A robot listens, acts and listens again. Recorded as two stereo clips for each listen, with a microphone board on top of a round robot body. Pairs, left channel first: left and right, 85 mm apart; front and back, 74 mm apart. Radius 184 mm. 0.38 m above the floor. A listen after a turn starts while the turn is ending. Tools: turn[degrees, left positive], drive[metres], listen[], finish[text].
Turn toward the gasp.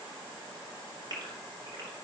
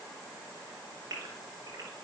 Thought: The gasp: 130° right.
Action: turn[-130]
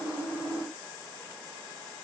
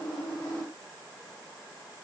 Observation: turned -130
Action: finish[Facing where the gasp came from. I can't hear it now.]